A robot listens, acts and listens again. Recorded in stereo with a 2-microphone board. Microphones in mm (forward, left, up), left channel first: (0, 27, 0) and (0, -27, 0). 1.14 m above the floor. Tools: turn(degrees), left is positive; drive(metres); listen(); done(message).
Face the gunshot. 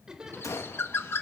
turn(degrees=75)
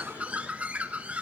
listen()
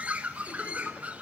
done("I heard a gunshot, but can't make it out now. It was about straight ahead or 30° left.")